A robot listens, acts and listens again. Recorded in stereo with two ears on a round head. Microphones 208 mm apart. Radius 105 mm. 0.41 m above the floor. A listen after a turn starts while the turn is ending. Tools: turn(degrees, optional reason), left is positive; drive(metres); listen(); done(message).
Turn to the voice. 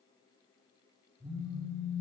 listen()
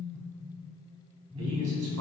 turn(degrees=-75, reason="The man speaking: about 75° right or 105° right.")
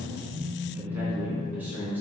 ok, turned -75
turn(degrees=-10, reason="So it is at 10° right.")
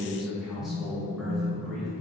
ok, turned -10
done("Facing the man speaking, 2 to 4 m away.")